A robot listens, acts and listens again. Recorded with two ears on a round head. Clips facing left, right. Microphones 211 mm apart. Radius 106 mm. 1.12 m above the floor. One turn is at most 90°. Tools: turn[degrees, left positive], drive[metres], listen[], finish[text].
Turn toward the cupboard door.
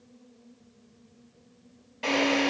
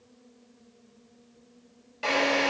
Action: listen[]
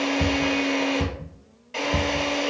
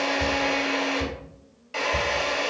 Thought: The cupboard door: about 60° left or 120° left.
Action: turn[60]
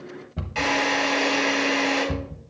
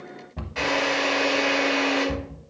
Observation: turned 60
Thought: So it is at 10° left.
Action: turn[10]
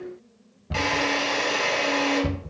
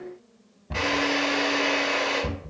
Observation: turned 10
Action: finish[Facing the cupboard door.]